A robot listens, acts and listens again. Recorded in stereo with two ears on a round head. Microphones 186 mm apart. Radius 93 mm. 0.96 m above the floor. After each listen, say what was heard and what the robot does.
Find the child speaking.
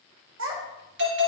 The child speaking: about 70° right or 110° right. Turn 70° right.
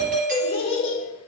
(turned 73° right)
So it is at 30° left. Turn 30° left.
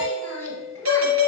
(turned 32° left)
The child speaking is now 10° left. Turn 10° left.
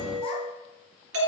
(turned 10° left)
Keep listening.
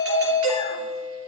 Keep listening.
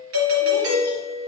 Facing where the child speaking came from. I can't hear it now.